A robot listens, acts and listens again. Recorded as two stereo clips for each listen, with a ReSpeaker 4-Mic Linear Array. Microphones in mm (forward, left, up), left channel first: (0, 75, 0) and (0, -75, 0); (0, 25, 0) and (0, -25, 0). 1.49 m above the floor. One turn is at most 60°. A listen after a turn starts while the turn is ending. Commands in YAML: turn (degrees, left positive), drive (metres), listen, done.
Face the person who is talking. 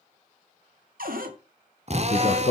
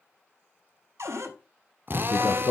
turn: 40
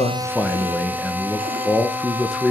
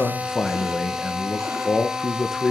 done: "Facing the man speaking, 1 to 2 m away."